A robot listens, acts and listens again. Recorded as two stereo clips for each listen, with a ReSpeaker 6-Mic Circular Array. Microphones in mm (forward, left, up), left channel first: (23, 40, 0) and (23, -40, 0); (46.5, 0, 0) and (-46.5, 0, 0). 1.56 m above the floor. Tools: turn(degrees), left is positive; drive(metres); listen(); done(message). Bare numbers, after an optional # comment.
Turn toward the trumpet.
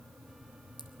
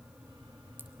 listen()
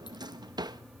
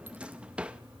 listen()
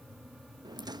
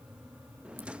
done("I can't make out a trumpet, only a drawer.")